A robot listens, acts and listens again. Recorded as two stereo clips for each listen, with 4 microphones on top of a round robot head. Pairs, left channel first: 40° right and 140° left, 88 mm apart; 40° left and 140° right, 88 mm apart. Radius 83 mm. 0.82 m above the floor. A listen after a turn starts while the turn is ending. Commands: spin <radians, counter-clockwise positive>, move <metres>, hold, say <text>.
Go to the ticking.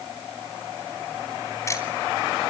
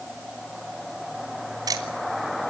spin -1.66
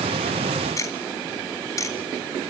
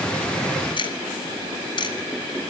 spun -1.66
spin 0.26
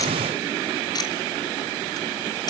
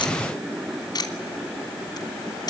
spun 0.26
move 1.0
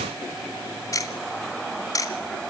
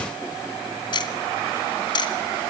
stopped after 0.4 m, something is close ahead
spin 0.17
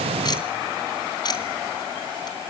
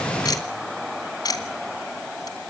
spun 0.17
say Blocked. The ticking is further on, straight ahead.